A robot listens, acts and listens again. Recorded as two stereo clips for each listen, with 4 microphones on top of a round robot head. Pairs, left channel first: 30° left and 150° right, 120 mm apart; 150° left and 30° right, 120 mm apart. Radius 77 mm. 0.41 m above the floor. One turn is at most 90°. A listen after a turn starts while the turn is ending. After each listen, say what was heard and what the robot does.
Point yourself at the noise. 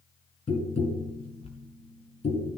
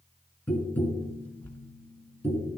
The tapping: 70° left. Turn 70° left.
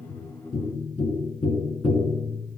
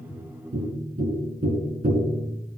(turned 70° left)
The tapping is now 15° right. Turn 15° right.
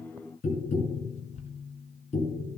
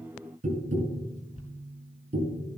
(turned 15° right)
Found it: tapping, straight ahead.